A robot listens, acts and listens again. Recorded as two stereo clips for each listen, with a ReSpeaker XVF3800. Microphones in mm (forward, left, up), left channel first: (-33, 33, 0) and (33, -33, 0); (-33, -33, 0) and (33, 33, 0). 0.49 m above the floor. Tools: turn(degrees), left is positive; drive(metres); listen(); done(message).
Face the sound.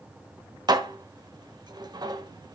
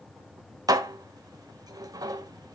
done("Facing the dishes clattering, 1 to 2 m away.")